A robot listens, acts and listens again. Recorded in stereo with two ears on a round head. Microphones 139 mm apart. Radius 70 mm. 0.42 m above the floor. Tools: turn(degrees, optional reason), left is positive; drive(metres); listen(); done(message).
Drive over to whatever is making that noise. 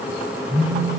turn(degrees=-55, reason="The phone buzzing: about 55° right or 125° right.")
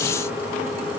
listen()
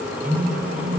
turn(degrees=-65, reason="So it is at 65° right.")
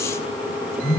turn(degrees=15, reason="The phone buzzing is now 15° left.")
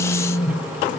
drive(metres=1.0)
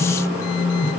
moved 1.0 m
drive(metres=1.0)
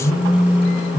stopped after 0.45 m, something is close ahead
done("I am next to the phone buzzing.")